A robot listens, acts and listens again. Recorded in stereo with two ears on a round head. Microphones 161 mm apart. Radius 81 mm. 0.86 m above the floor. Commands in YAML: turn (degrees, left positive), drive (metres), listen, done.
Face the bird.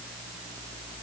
listen: true
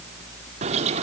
turn: -40
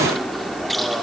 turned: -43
done: "Found it: a bird, straight ahead."